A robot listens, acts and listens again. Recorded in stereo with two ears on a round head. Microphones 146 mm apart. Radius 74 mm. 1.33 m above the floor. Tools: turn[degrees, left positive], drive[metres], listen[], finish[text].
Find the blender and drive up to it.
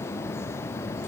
Action: listen[]
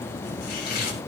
Action: listen[]
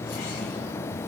Action: finish[I can't make out a blender, only chopping.]